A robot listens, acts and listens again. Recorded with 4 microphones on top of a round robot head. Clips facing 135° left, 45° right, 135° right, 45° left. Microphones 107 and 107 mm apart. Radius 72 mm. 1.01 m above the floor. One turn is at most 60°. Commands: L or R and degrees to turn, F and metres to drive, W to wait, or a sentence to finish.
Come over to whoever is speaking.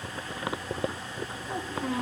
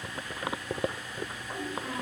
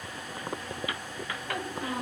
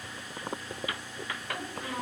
L60
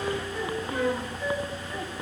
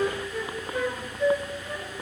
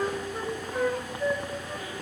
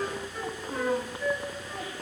L60
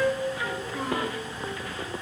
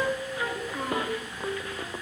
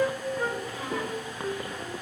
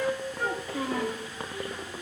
L35
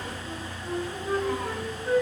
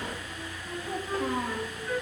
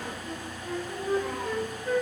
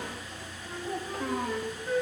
F1.0
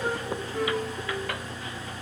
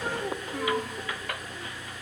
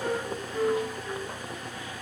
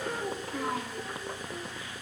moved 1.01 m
W
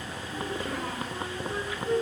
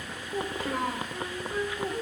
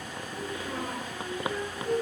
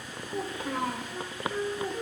F1.0
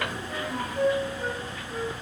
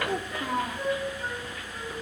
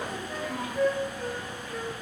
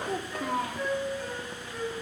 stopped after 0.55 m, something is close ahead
I am next to the child speaking.